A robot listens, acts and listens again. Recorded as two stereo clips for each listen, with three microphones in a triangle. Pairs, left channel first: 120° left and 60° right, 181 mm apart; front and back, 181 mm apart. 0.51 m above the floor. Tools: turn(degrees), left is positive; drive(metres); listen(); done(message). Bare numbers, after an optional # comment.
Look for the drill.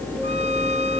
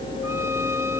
listen()
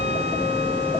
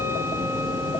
listen()
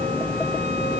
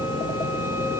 done("I can't make out a drill to turn to.")